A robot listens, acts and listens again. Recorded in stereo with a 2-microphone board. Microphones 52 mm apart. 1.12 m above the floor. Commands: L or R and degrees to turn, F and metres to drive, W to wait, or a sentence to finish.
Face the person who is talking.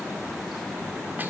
W
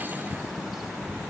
W
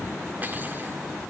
I can't make out anyone speaking.